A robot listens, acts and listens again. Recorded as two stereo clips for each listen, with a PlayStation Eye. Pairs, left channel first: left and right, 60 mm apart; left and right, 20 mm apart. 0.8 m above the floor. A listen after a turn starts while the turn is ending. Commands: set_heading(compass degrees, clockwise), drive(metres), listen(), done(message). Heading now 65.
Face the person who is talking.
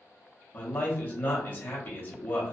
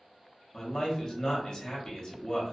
set_heading(30)
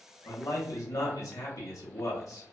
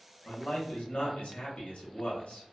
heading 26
set_heading(286)
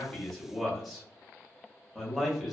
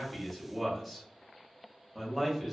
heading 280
done("Found it: a man speaking, straight ahead.")